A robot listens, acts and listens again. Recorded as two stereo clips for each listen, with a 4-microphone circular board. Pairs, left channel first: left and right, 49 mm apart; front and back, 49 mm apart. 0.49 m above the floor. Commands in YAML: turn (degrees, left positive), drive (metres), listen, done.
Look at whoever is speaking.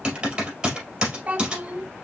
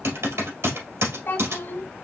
turn: -30
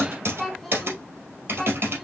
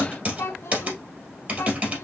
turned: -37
done: "Found it: a child speaking, straight ahead."